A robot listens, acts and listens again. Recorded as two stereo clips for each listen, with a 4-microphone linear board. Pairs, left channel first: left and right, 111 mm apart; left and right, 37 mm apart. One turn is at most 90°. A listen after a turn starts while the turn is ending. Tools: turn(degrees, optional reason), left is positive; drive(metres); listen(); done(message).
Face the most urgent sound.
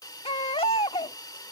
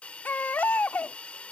turn(degrees=60, reason="The baby crying: about 60° left or 120° left.")
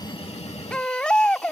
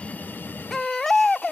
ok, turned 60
turn(degrees=10, reason="So it is at 10° left.")
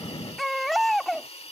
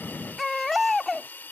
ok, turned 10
done("Facing the baby crying.")